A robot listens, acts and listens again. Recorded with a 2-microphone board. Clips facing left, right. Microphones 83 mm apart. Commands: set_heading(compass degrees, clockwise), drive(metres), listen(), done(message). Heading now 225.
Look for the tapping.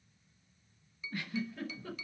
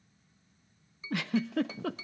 set_heading(255)
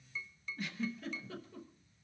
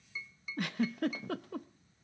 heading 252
set_heading(262)
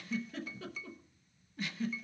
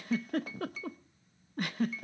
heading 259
done("Found it: tapping, straight ahead, 1 to 2 m away.")